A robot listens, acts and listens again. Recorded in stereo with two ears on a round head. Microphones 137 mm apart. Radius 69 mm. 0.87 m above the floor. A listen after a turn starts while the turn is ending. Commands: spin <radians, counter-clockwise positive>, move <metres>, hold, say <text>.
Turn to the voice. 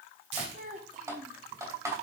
spin -0.96
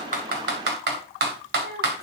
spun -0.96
spin -1.13
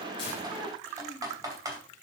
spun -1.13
spin 0.17
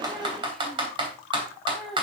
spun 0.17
say Facing the child speaking, 2 to 4 m away.